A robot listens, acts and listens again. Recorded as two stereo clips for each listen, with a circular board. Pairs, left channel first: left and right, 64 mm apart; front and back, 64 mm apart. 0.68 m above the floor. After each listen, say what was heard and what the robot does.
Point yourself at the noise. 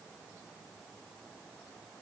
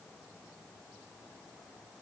Keep listening.
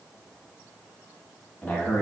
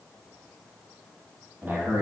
The man speaking: 145° left. Turn 145° left.
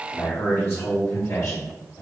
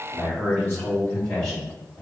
The man speaking is now 60° left. Turn 60° left.
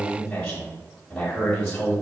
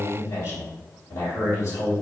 The man speaking is now 15° left. Turn 15° left.
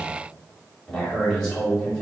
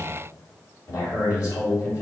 Facing the man speaking, 1 to 2 m away.